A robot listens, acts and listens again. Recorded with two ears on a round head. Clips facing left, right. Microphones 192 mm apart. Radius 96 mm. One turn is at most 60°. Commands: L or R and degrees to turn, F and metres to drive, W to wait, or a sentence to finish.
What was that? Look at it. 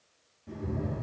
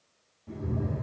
L25
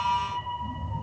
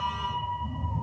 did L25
L15
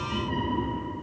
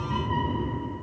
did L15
L30
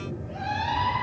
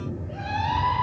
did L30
Facing the cat meowing, 2 to 4 m away.